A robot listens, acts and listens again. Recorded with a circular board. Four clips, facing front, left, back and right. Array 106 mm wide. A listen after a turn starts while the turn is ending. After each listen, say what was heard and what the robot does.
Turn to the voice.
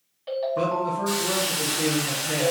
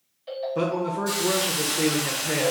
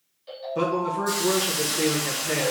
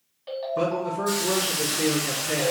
The man speaking: 130° left. Turn 130° left.
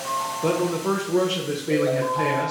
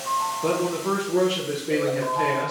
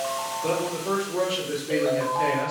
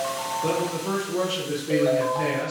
The man speaking is now 10° left. Turn 10° left.
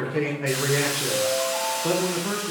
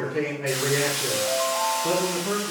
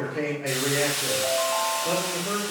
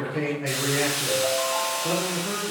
Facing the man speaking.